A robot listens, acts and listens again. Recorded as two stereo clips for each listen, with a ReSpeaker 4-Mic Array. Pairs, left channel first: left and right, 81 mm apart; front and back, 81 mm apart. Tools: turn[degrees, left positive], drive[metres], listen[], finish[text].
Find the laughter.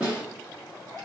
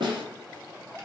Action: listen[]
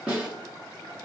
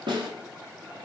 Action: listen[]
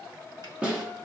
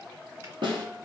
Action: finish[I can't make out laughter to turn to.]